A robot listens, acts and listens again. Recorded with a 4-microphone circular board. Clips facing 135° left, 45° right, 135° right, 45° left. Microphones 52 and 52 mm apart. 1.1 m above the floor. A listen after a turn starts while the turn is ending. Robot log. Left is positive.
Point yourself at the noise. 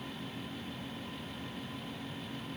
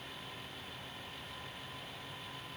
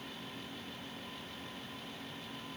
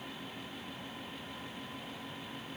cmd idle
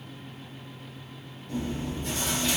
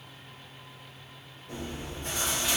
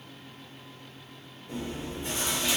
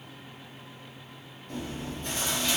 note: The chewing: 65° right.
cmd yaw -65
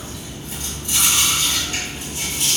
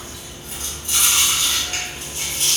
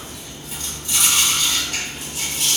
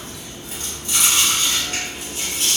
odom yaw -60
end: Found it: chewing, straight ahead, 1 to 2 m away.